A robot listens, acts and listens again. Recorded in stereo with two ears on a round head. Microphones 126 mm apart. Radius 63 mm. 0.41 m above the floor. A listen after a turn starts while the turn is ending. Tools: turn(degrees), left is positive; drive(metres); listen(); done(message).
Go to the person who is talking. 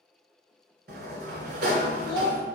turn(degrees=-35)
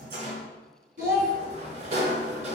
turn(degrees=-110)
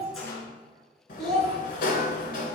drive(metres=1.0)
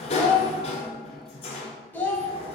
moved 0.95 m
turn(degrees=15)
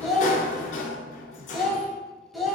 drive(metres=1.0)
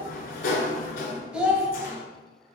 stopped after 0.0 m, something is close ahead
done("I am next to the child speaking.")